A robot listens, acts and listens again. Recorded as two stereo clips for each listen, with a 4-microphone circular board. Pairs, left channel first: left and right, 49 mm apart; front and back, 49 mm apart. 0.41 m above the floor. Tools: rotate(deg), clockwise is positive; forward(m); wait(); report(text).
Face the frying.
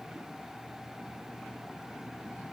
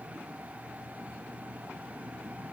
wait()
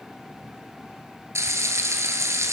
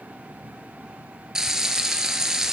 rotate(100)
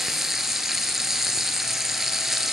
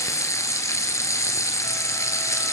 report("Facing the frying.")